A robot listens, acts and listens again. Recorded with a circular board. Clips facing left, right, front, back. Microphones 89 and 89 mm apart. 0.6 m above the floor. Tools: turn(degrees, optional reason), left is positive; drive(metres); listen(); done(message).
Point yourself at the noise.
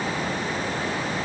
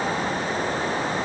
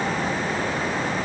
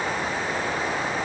listen()
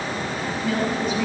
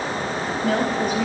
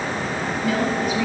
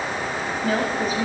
turn(degrees=-130, reason="The woman speaking: 130° right.")
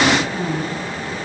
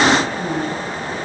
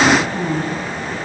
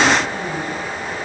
turn(degrees=25, reason="The woman speaking is now 25° left.")
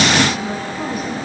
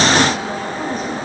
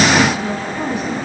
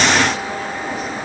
listen()
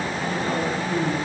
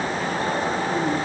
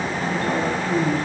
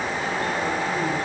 turn(degrees=10, reason="The woman speaking is now 10° left.")
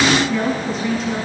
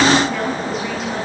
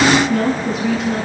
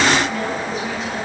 done("Found it: a woman speaking, straight ahead, over 4 m away.")